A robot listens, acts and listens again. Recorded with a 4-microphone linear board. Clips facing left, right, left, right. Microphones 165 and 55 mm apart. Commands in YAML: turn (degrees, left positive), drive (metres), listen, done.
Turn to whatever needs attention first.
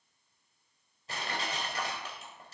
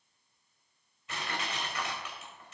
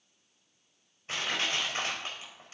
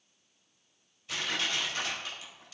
listen: true
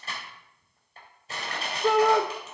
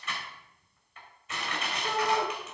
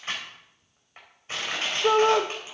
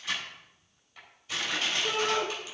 turn: 90
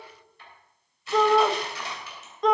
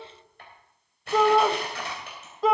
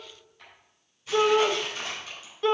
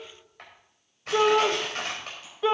done: "Found it: a shout, straight ahead, 1 to 2 m away."